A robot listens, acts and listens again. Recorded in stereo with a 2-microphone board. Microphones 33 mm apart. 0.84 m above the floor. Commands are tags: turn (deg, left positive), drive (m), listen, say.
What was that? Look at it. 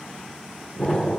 <turn deg="30"/>
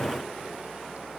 <listen/>
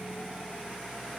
<say>I heard an explosion, but can't make it out now. It was about straight ahead or 120° left.</say>